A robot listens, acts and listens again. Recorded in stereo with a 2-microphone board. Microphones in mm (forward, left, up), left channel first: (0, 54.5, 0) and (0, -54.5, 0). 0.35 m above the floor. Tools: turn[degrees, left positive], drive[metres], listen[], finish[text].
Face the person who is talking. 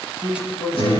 Thought: The man speaking: about 20° left or 160° left.
Action: turn[20]
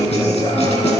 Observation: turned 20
Action: listen[]
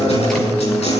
Action: listen[]
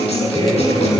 Action: finish[I heard a man speaking, but can't make it out now. It was about straight ahead or 140° left.]